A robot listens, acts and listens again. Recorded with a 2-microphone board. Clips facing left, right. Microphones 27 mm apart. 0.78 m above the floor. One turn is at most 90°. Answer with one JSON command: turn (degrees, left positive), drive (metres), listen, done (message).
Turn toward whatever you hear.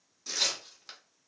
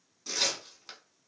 {"turn": -30}
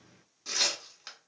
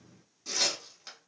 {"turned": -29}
{"turn": 25}
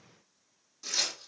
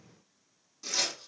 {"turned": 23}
{"done": "Facing the tearing paper, 1 to 2 m away."}